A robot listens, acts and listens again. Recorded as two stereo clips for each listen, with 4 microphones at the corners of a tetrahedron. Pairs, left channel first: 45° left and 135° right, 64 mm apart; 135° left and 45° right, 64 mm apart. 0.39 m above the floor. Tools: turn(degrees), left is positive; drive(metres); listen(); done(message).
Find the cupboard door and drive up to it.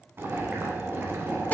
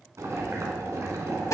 listen()
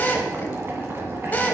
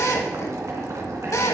listen()
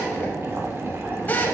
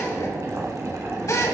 done("I can't make out a cupboard door, only boiling and a drill.")